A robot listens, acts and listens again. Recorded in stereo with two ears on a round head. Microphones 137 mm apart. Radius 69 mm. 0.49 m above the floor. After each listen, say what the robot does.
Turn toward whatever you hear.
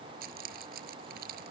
Turn 65° right.
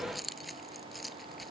Found it: keys jangling, straight ahead.